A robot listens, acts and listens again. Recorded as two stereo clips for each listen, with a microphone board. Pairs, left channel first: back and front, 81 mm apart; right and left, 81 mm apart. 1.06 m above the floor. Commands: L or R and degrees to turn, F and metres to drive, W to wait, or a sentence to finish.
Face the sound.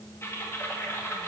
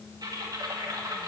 L125
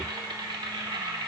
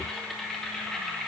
Facing the typing on a keyboard.